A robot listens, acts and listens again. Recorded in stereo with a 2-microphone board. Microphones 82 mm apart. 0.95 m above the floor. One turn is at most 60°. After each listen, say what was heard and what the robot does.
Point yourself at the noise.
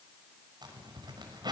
The zipper: about 60° right or 120° right. Turn 60° right.
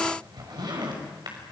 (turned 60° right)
So it is at 60° right. Turn 60° right.
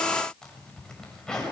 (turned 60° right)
Facing the zipper, over 4 m away.